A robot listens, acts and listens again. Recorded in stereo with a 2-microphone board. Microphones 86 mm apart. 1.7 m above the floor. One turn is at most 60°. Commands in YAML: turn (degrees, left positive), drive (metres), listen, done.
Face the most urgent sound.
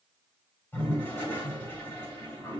listen: true
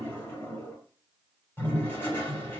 listen: true
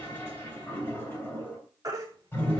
turn: -40
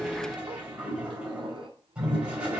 listen: true
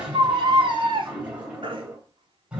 turn: -60
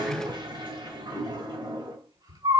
turn: -55
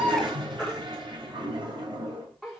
done: "Found it: a baby crying, straight ahead, 2 to 4 m away."